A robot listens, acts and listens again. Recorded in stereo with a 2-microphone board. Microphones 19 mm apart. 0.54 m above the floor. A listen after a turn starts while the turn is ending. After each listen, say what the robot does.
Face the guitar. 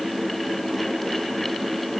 Keep listening.
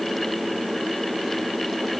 Keep listening.
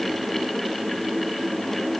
I can't make out a guitar to turn to.